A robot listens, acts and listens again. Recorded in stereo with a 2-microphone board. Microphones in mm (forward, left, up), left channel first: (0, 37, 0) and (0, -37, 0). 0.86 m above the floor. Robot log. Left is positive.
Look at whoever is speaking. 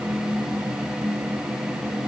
cmd idle
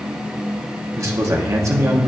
note: The man speaking: about 45° right or 135° right.
cmd yaw -45
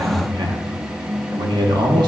note: So it is at 90° right.
cmd yaw -90
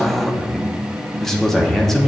end: Found it: a man speaking, straight ahead.